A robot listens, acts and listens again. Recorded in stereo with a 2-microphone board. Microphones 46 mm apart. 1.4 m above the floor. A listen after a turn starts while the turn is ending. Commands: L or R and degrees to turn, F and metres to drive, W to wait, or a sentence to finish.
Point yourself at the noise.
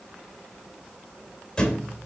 L15
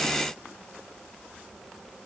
W
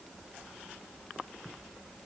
I heard a thud, but can't make it out now. It was about straight ahead or 150° left.